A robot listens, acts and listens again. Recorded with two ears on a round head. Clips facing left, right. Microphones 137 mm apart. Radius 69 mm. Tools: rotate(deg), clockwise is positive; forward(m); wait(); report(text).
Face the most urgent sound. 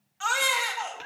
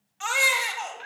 rotate(15)
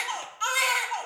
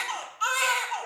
report("Found it: a baby crying, straight ahead, 1 to 2 m away.")